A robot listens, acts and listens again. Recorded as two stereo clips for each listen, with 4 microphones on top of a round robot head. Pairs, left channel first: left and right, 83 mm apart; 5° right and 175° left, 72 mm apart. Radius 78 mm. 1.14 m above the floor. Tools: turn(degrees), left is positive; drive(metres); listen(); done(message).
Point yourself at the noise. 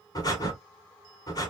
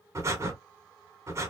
turn(degrees=130)
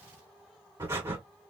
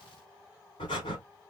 turn(degrees=-25)
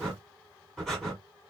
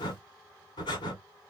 done("Found it: breathing, straight ahead.")